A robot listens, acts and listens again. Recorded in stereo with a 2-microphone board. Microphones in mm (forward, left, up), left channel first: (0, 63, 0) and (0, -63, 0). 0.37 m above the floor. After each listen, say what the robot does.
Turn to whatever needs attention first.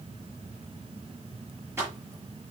Keep listening.
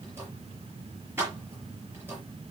Keep listening.
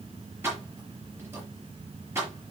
I can't make out anything urgent to turn to.